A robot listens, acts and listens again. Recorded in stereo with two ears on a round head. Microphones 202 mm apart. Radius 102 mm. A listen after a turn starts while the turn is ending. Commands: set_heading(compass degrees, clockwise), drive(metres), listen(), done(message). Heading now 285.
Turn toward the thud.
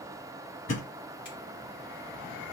set_heading(230)
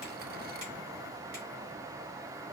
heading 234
listen()
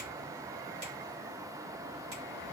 done("I heard a thud, but can't make it out now. It was about straight ahead or 75° left.")